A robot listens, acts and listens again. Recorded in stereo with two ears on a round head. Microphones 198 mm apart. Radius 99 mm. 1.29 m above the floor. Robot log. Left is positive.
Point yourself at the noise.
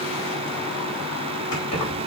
note: The keys jangling: about 70° left or 110° left.
cmd yaw +70
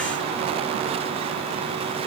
cmd idle
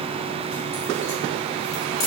note: So it is at 15° left.
cmd yaw +15
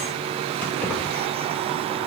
note: The keys jangling is now 10° left.
cmd yaw +10
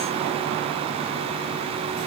cmd idle
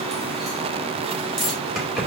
end: Facing the keys jangling, 2 to 4 m away.